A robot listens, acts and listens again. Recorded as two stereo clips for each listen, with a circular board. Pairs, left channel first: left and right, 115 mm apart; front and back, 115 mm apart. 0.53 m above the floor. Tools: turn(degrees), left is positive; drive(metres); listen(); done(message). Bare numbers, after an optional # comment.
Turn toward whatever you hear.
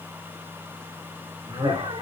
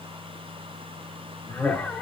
# The laughter: 70° right.
turn(-70)
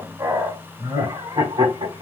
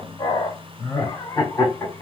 # The laughter is now 70° right.
turn(-70)
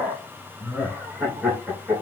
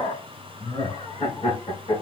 # The laughter is now 10° right.
turn(-10)
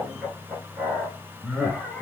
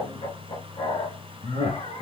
done("Found it: laughter, straight ahead, 2 to 4 m away.")